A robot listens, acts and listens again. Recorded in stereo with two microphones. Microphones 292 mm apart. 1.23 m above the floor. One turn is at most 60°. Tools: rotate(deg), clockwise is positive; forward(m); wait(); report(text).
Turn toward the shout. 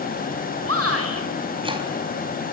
rotate(55)
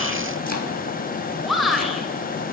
report("Found it: a shout, straight ahead, over 4 m away.")